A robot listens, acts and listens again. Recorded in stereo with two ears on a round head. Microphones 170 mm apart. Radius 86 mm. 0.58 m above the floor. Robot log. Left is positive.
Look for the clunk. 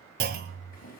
note: The clunk: about 55° right or 125° right.
cmd yaw -55
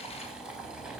cmd idle
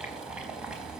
end: I heard a clunk, but can't make it out now. It was about straight ahead or 70° right.